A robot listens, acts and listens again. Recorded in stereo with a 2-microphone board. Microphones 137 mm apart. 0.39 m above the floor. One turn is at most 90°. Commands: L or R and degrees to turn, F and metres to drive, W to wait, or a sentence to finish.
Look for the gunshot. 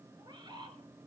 W
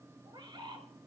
W
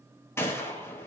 L20
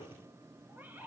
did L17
W
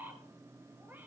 I heard a gunshot, but can't make it out now. It was about straight ahead or 145° left.